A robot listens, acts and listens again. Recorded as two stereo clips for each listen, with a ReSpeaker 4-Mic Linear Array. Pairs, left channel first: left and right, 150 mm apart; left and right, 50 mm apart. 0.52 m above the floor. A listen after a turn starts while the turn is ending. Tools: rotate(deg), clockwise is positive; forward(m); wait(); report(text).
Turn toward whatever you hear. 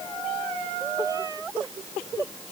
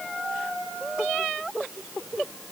wait()
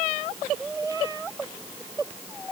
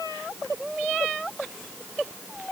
wait()
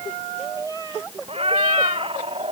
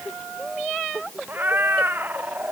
rotate(40)
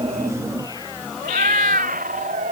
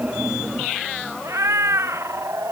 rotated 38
rotate(100)
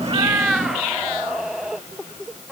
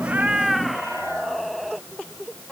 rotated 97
report("Facing the cat meowing.")